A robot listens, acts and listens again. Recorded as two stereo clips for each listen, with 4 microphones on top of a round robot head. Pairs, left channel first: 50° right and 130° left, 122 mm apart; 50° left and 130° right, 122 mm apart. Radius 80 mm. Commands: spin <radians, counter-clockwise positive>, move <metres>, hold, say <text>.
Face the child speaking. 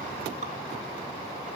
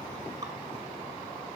hold
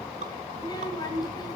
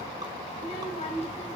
spin 0.17
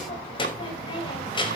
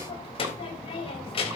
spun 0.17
say Facing the child speaking, over 4 m away.